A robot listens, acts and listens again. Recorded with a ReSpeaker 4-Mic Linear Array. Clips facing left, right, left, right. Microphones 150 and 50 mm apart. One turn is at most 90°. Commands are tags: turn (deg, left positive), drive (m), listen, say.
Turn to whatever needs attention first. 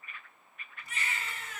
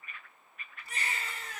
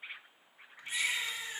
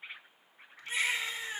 <turn deg="-35"/>
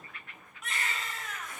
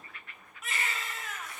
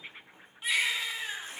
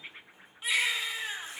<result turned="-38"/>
<say>Found it: a baby crying, straight ahead, under 1 m away.</say>